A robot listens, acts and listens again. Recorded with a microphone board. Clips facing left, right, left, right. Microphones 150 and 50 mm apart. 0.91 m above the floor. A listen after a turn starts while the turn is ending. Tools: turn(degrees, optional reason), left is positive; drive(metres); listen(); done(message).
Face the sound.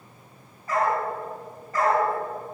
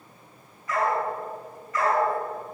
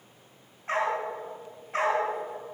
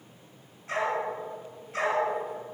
turn(degrees=35, reason="The dog barking: about 35° left or 145° left.")
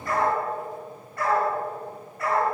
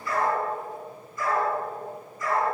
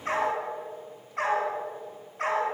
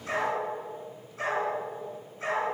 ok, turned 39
turn(degrees=105, reason="So it is at 105° left.")
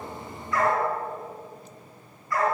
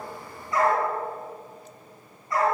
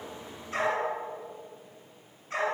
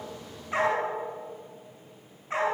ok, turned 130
turn(degrees=-25, reason="The dog barking is now 25° right.")
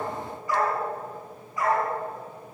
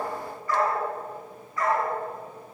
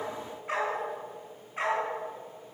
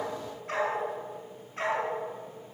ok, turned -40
turn(degrees=20, reason="The dog barking is now 20° left.")
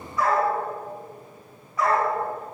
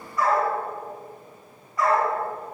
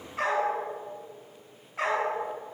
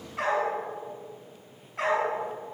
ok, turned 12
done("Found it: a dog barking, straight ahead, over 4 m away.")